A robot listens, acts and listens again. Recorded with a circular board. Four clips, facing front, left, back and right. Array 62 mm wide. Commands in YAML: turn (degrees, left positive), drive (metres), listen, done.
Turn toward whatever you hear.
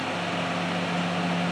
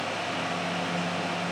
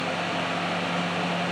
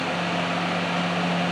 listen: true
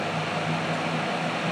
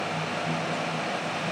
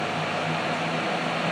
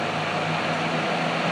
listen: true
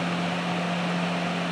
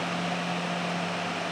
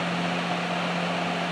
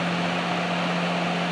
done: "I can't make out anything to turn to."